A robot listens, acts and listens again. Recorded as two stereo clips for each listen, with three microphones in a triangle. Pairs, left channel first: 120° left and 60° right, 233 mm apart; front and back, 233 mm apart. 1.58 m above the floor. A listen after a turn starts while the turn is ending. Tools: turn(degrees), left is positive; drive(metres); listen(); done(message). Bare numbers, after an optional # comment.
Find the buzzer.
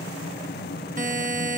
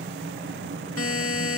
done("Facing the buzzer.")